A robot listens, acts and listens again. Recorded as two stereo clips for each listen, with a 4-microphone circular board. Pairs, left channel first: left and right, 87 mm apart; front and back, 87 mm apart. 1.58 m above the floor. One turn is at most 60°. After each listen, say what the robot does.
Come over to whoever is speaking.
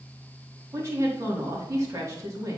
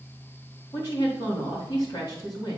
Turn 35° right.
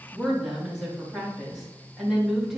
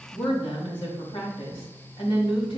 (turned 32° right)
Drive 1.0 m forward.
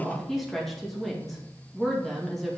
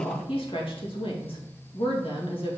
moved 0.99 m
Drive 1.0 m forward.
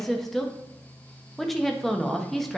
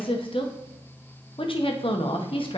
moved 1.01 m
Drive 1.0 m forward.
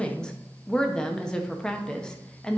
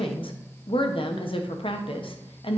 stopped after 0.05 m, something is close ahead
Turn 10° left.
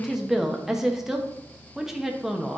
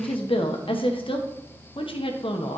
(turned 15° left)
I am next to the woman speaking.